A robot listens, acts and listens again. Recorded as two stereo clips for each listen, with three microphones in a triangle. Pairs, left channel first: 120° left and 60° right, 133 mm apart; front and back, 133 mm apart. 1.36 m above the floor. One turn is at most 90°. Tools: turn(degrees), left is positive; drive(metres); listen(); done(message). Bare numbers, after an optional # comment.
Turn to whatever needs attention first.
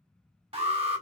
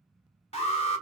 # The alarm: 25° right.
turn(-25)
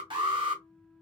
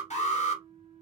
# The alarm is now 15° right.
turn(-15)
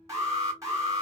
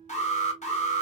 done("Facing the alarm, 1 to 2 m away.")